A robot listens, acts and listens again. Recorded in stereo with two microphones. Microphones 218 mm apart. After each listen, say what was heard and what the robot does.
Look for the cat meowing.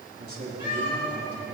The cat meowing: about 60° left or 120° left. Turn 60° left.
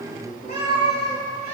So it is at 50° left. Turn 50° left.
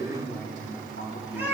The cat meowing is now 10° right. Turn 10° right.
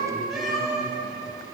Found it: a cat meowing, straight ahead.